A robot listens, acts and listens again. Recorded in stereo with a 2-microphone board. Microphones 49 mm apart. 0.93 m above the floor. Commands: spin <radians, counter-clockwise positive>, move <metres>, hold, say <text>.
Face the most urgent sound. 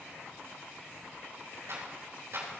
hold
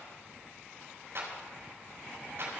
hold
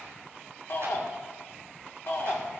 spin 0.96
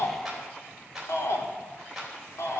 spin 1.22
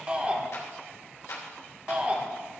spin -0.35
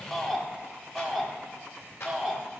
say Facing the shout.